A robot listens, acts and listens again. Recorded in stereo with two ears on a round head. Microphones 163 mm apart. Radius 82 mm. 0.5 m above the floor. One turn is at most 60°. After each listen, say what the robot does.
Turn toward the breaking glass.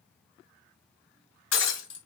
Turn 60° left.
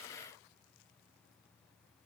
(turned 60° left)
Turn 30° left.
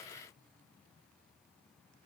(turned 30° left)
I heard breaking glass from this way, but can't make it out now.